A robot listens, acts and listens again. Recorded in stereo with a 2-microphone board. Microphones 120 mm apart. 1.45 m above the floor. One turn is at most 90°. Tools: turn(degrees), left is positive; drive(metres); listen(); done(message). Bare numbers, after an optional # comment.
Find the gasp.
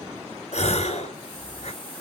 # The gasp: about 60° left or 120° left.
turn(60)
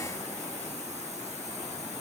listen()
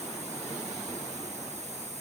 done("I heard a gasp, but can't make it out now. It was about straight ahead or 60° left.")